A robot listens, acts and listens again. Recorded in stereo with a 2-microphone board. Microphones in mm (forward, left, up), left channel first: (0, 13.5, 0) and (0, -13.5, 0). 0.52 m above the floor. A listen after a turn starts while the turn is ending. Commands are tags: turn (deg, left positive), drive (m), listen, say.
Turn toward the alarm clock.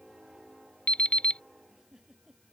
<turn deg="45"/>
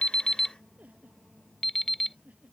<turn deg="10"/>
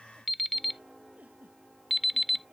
<say>Facing the alarm clock.</say>